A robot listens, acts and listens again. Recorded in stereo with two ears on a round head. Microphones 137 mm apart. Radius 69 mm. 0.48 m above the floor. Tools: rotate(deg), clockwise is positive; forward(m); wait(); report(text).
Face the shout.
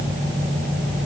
wait()
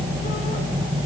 wait()
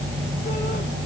report("I can't make out a shout to turn to.")